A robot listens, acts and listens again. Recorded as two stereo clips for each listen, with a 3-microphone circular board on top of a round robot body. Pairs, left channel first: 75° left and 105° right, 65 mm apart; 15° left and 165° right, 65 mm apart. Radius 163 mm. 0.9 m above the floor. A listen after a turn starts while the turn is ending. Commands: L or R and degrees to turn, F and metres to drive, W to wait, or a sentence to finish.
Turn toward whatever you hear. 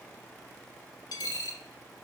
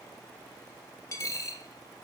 L60
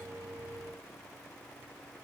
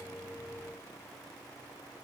I heard a dropped coin from this way, but can't make it out now.